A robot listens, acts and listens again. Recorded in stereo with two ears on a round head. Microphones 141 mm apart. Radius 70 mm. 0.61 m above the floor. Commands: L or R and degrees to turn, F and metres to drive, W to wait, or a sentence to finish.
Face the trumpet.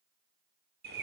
W
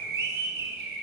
W
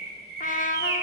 L50
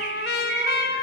L75
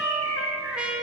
Found it: a trumpet, straight ahead, under 1 m away.